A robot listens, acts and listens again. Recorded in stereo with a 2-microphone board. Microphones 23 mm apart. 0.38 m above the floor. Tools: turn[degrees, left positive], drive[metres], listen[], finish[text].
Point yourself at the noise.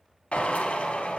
Thought: The drill: about 70° left or 110° left.
Action: turn[70]
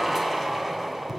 Action: finish[Found it: a drill, straight ahead, 1 to 2 m away.]